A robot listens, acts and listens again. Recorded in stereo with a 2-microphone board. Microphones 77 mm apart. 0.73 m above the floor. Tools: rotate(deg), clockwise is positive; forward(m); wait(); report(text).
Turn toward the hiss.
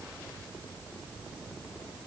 wait()
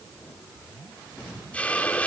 rotate(-15)
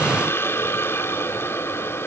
rotate(-150)
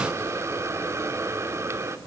rotate(35)
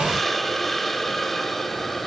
report("Found it: a hiss, straight ahead, 1 to 2 m away.")